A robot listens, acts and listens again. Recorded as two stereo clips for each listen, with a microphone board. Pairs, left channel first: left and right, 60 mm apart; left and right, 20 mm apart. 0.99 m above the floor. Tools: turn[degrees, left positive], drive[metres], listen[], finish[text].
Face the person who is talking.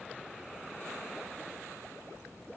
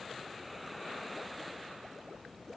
Action: listen[]
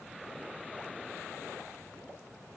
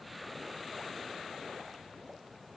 Action: listen[]
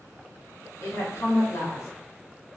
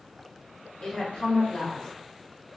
Thought: The woman speaking: about 55° left or 125° left.
Action: turn[55]
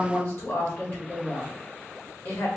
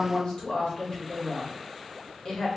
Thought: So it is at 55° left.
Action: turn[55]
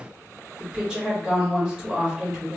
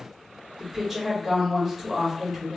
Thought: The woman speaking is now 15° right.
Action: turn[-15]
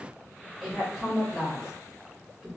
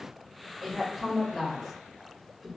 Action: finish[Found it: a woman speaking, straight ahead, 1 to 2 m away.]